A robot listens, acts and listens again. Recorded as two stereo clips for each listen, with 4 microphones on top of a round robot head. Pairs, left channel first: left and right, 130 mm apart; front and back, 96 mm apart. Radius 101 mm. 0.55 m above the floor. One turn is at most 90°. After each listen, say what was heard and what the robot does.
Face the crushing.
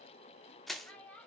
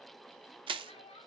The crushing: straight behind. Turn 90° left.
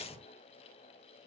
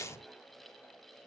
The crushing is now 60° left. Turn 60° left.
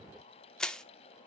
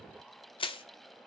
Facing the crushing, under 1 m away.